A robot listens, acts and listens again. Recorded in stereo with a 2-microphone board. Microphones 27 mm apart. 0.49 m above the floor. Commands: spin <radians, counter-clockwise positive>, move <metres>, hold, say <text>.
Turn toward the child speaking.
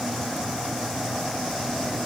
hold
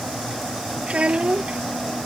spin -0.87
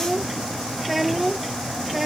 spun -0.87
say Found it: a child speaking, straight ahead.